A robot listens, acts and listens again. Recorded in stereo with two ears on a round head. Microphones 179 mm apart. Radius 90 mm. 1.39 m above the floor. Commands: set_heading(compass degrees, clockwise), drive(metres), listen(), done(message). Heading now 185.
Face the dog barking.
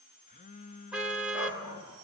set_heading(95)
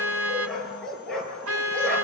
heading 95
done("Found it: a dog barking, straight ahead, over 4 m away.")